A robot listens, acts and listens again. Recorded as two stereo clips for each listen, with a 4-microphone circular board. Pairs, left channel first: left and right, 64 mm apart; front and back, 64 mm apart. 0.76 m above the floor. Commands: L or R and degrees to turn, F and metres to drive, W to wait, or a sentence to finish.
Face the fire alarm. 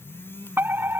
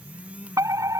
R145
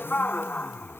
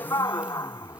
L25
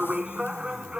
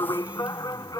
R15
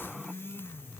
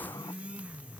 W
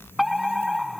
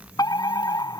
Found it: a fire alarm, straight ahead.